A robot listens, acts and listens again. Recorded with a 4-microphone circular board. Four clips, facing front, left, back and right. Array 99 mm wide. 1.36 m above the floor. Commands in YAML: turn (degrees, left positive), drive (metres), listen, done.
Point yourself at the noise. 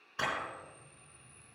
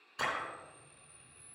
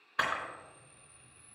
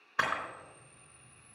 turn: -120
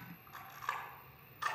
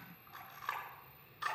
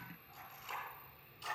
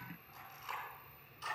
turn: 35
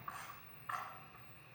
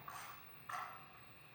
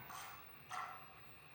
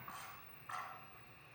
done: "Facing the camera shutter, 2 to 4 m away."